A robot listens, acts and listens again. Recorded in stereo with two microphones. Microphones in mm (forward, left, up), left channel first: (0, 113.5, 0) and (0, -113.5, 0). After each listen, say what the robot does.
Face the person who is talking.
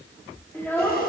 Turn 30° left.
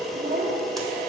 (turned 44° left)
Turn 35° right.
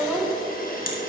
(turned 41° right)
Facing the child speaking.